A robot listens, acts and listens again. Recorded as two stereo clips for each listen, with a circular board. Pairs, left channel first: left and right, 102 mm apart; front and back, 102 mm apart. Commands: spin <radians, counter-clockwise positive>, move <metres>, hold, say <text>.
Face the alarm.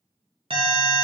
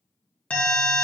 spin -1.31
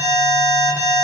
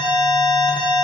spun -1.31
spin -0.44
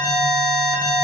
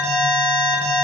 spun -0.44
spin -0.35
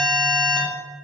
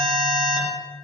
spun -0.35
say Facing the alarm.